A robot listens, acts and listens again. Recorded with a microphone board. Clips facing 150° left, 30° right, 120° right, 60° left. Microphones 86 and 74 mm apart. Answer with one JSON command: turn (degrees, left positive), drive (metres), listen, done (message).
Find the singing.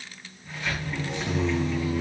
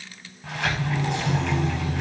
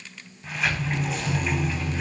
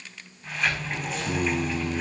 {"turn": 75}
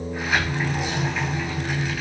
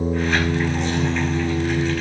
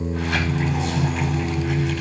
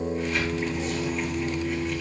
{"turn": -40}
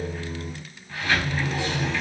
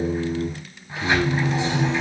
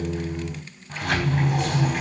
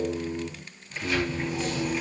{"turn": -15}
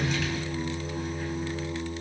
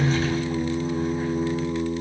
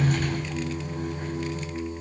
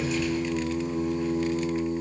{"done": "Facing the singing, over 4 m away."}